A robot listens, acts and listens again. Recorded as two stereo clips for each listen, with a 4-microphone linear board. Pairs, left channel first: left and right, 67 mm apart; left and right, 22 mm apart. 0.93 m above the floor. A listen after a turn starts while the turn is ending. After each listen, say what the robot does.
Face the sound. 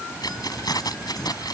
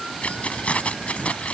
Turn 90° left.
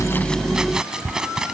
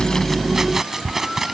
Turn 10° right.
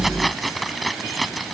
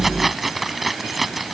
Facing the keys jangling.